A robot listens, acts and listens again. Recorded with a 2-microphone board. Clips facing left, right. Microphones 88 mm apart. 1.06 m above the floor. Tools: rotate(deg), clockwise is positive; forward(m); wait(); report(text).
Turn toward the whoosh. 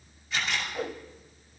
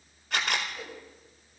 rotate(-55)
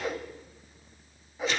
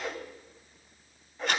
report("Found it: a whoosh, straight ahead.")